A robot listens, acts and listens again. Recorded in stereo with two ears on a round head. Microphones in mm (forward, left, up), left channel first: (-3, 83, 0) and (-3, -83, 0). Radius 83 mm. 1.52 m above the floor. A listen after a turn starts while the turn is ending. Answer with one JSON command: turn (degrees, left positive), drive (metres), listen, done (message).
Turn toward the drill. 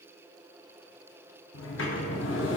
{"listen": true}
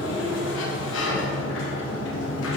{"listen": true}
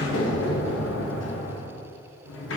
{"done": "I can't make out a drill to turn to."}